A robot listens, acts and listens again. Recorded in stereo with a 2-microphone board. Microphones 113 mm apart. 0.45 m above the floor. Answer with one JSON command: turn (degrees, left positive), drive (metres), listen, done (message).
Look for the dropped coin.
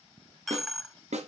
{"turn": 30}
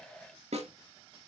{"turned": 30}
{"listen": true}
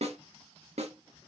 {"done": "I heard a dropped coin, but can't make it out now. It was about 30° right or 150° left."}